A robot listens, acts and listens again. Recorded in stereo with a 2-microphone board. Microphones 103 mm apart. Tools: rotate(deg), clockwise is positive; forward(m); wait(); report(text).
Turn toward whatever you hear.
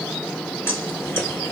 rotate(-25)
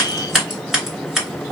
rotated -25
report("Found it: scissors, straight ahead.")